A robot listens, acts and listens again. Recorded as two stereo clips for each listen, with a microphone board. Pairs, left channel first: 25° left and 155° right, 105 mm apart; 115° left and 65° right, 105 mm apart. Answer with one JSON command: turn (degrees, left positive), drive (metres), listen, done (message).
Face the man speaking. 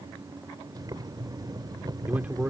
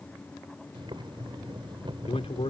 {"turn": 130}
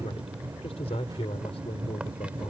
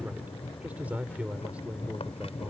{"turn": 10}
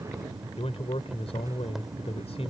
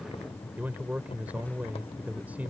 {"done": "Facing the man speaking."}